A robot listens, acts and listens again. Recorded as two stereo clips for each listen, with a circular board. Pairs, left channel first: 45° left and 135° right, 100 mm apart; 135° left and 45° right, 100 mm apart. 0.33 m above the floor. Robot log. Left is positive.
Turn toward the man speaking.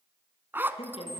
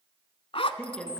note: The man speaking: 55° left.
cmd yaw +55
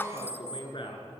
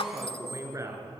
note: The man speaking is now 15° left.
cmd yaw +15
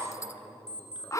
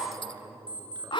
cmd idle
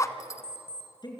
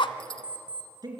end: Found it: a man speaking, straight ahead, over 4 m away.